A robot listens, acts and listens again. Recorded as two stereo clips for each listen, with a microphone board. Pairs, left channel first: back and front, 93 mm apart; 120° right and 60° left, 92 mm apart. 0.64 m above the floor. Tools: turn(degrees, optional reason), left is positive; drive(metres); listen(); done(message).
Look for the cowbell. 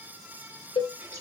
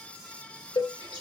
turn(degrees=-160, reason="The cowbell: 160° right.")
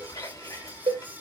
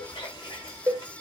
done("Found it: a cowbell, straight ahead, 1 to 2 m away.")